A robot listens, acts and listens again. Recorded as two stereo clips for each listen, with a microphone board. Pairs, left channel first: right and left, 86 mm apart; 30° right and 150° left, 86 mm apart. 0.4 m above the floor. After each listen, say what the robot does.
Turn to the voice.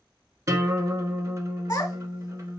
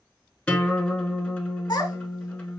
Turn 60° right.
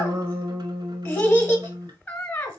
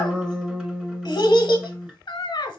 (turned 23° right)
Turn 35° right.
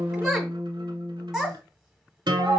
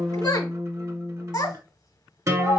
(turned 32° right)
Found it: a child speaking, straight ahead.